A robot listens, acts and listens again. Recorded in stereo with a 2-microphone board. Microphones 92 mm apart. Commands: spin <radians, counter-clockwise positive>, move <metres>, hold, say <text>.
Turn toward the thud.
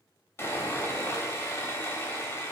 hold
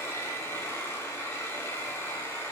hold
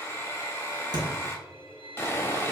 spin -0.96
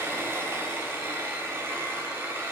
hold
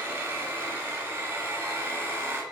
say I heard a thud, but can't make it out now. It was about straight ahead or 70° right.